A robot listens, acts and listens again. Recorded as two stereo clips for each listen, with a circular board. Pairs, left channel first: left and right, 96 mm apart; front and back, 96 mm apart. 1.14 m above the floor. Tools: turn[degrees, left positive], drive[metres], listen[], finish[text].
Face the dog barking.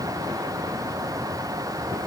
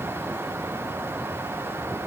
Action: listen[]
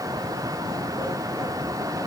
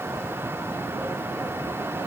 Action: listen[]
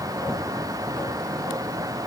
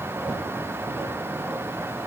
Action: finish[I can't make out a dog barking to turn to.]